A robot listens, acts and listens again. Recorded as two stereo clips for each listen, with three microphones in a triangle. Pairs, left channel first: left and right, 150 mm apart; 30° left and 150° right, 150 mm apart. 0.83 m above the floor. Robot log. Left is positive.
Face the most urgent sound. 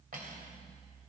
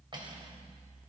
cmd idle
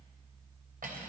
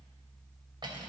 cmd idle
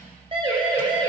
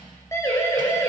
note: The siren: 40° right.
cmd yaw -40
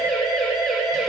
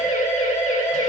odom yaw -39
end: Facing the siren, 2 to 4 m away.